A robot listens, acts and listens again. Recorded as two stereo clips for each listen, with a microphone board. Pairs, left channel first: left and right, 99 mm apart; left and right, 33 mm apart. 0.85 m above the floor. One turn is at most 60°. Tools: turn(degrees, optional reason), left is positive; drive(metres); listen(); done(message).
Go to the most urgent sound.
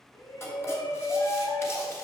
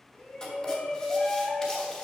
turn(degrees=40, reason="The shout: about 40° left or 140° left.")
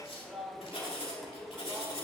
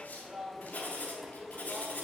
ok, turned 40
drive(metres=1.0)
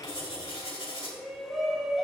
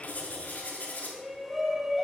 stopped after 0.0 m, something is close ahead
done("Something is in my way. I am facing the shout but have not reached it.")